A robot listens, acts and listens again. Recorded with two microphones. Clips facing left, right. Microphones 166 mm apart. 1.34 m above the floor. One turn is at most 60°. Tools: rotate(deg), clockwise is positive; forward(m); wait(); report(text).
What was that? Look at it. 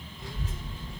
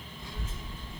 rotate(-60)
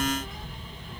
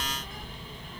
rotate(-20)
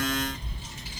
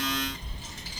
rotate(-10)
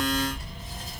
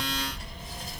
report("Facing the child speaking.")